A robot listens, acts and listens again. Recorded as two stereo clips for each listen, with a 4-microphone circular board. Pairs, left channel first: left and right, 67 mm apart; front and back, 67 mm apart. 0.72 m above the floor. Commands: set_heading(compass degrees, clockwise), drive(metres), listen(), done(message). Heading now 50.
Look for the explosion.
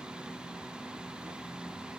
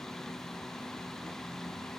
listen()
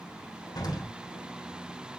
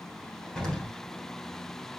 set_heading(335)
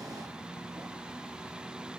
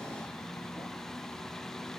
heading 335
done("I heard an explosion from this way, but can't make it out now.")